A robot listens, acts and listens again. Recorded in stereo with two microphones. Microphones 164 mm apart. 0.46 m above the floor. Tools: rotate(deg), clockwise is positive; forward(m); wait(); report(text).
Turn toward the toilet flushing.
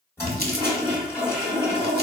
rotate(-15)
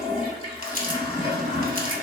rotate(-150)
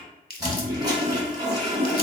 rotate(25)
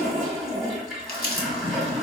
report("Found it: a toilet flushing, straight ahead.")